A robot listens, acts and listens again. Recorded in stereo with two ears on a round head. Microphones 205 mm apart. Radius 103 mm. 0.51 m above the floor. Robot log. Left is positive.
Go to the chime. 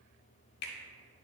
cmd idle
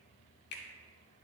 cmd idle
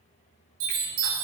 note: The chime: about 70° right or 110° right.
cmd yaw -70
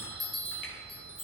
cmd fwd 1.0
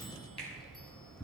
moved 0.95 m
cmd fwd 1.0
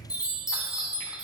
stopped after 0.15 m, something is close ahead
end: Arrived at the chime, straight ahead.